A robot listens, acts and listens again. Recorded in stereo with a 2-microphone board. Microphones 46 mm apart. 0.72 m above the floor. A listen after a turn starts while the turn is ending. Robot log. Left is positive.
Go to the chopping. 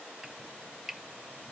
cmd yaw -30
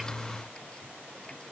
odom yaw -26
cmd idle
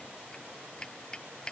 note: So it is at 20° left.
cmd yaw +20
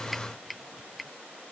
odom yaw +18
cmd fwd 1.0
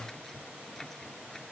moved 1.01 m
note: The chopping is now 10° left.
cmd yaw +10
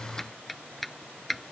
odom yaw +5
cmd fwd 1.0
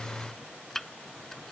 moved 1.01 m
note: The chopping is now 10° left.
cmd yaw +10
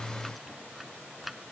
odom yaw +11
cmd fwd 1.0
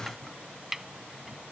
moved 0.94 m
cmd fwd 1.0
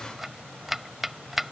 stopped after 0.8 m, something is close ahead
end: Arrived at the chopping, straight ahead.